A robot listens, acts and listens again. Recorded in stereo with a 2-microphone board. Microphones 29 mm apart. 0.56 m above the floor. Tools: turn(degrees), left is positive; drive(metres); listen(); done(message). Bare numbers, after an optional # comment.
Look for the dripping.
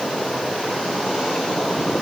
listen()
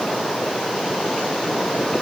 listen()
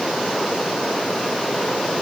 done("I can't make out dripping.")